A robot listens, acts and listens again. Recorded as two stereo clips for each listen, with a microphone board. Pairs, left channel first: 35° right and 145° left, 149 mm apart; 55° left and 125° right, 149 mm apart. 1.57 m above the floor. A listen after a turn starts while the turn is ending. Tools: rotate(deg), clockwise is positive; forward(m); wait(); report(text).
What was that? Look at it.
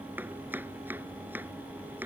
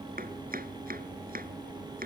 rotate(135)
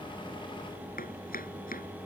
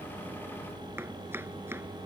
rotate(50)
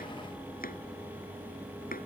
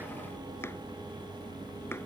rotate(20)
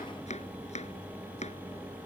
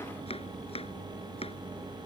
report("Facing the chopping.")